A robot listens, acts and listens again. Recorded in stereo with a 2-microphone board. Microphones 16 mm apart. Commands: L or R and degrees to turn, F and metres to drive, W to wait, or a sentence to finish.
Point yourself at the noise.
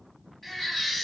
L15
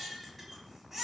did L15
Facing the baby crying, 2 to 4 m away.